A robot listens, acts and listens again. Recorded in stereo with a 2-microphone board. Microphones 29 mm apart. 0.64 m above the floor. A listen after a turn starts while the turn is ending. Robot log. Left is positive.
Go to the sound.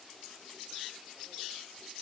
cmd idle
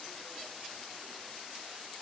cmd idle
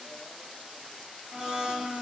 cmd yaw -30
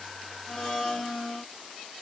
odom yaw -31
note: So it is at 15° left.
cmd yaw +15
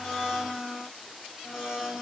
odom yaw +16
cmd fwd 1.0
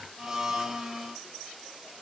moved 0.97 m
cmd fwd 1.0
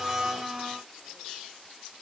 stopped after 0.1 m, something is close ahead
end: I am next to the blender.